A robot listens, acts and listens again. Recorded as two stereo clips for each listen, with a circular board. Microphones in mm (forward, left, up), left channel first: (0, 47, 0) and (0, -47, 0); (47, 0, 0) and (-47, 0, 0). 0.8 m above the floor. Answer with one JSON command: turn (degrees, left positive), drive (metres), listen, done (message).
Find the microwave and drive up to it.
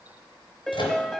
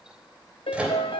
{"turn": 100}
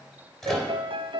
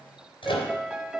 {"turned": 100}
{"drive": 1.0}
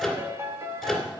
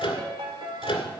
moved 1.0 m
{"drive": 1.0}
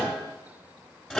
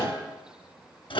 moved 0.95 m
{"drive": 1.0}
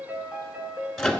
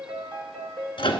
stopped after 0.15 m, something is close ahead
{"done": "Arrived at the microwave, straight ahead."}